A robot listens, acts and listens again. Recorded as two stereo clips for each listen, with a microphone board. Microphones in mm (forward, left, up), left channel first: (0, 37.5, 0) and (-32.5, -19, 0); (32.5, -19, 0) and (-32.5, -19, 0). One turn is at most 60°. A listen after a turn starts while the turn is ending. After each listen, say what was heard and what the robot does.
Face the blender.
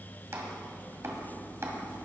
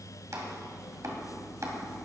Keep listening.
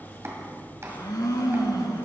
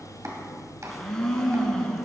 The blender: 80° left. Turn 60° left.
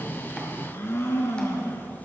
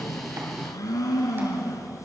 The blender is now 10° left. Turn 10° left.
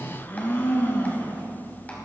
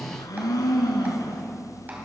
Facing the blender, 1 to 2 m away.